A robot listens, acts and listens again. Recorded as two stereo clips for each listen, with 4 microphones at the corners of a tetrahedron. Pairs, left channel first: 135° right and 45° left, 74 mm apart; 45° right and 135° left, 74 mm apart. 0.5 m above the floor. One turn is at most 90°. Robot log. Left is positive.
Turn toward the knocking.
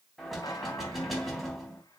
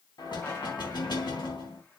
note: The knocking: 45° right.
cmd yaw -45
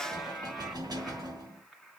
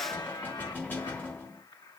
note: The knocking is now 20° left.
cmd yaw +20
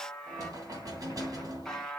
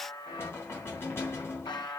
note: The knocking is now 10° left.
cmd yaw +10
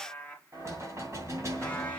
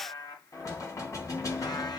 end: Found it: knocking, straight ahead, 2 to 4 m away.